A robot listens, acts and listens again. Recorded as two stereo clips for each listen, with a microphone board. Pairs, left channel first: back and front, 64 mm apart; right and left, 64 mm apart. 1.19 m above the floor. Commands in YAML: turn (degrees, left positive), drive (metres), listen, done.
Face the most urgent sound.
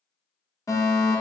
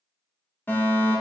turn: -150
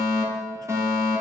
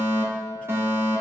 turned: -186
turn: 40
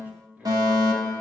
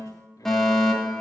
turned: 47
done: "Facing the fire alarm."